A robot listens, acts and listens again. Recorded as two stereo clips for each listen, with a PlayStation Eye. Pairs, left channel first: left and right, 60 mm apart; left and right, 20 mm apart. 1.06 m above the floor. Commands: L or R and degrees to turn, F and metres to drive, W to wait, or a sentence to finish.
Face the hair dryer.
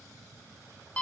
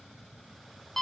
W
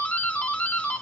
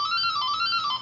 W
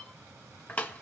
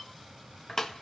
I can't make out a hair dryer, only a doorbell.